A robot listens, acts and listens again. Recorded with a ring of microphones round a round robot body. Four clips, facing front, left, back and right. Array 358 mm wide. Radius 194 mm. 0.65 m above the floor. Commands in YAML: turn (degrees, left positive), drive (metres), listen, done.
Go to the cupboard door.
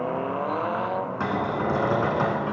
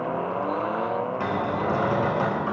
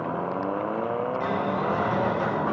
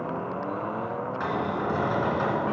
turn: 20
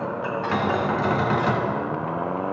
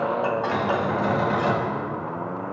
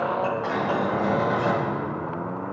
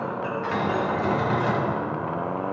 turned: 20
drive: 1.0
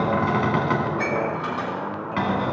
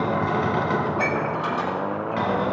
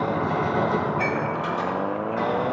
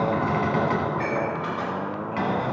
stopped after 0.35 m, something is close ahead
done: "Blocked. The cupboard door is further on, straight ahead."